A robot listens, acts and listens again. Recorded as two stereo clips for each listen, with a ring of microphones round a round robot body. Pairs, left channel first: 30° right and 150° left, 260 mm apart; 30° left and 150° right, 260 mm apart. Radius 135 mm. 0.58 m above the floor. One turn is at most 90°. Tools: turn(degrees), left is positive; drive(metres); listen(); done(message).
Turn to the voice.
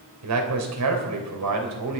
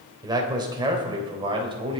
turn(degrees=90)
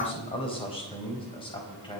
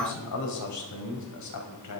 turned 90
turn(degrees=40)
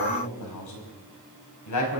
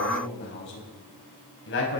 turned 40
turn(degrees=-15)
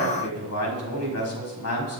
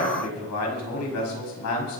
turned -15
done("Found it: a man speaking, straight ahead, over 4 m away.")